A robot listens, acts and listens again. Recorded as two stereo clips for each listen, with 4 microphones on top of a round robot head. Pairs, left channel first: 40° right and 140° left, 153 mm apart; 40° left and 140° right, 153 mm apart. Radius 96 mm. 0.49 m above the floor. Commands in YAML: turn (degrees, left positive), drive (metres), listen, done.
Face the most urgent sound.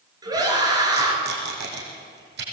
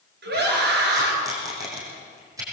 turn: -155
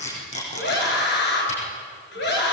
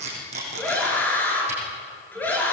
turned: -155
turn: -40
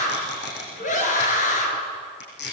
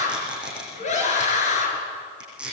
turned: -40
done: "Found it: a scream, straight ahead."